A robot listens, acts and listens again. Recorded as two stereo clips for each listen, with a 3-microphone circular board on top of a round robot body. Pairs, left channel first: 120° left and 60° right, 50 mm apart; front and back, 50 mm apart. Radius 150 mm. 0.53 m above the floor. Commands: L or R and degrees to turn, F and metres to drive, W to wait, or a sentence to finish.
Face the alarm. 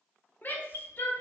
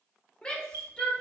L145
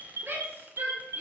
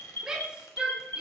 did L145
R35
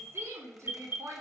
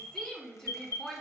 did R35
R10
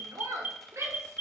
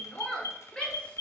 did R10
Found it: an alarm, straight ahead, 2 to 4 m away.